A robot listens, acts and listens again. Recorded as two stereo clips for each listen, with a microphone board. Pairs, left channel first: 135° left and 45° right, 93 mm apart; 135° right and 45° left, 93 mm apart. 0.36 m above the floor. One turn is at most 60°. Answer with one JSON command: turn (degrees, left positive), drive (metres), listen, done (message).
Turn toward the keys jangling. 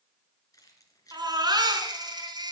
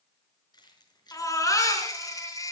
{"turn": -60}
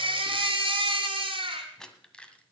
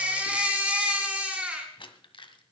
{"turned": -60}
{"turn": -60}
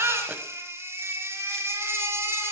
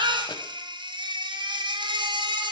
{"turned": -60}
{"turn": -60}
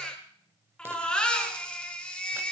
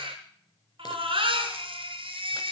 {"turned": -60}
{"turn": -30}
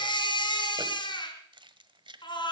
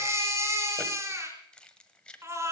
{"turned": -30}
{"turn": -55}
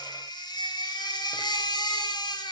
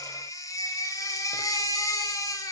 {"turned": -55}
{"listen": true}
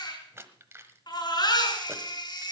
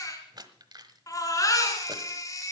{"turn": 15}
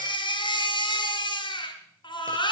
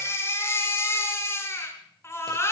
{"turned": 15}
{"listen": true}
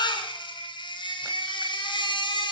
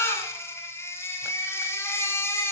{"listen": true}
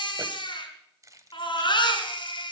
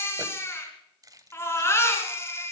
{"done": "Found it: keys jangling, straight ahead."}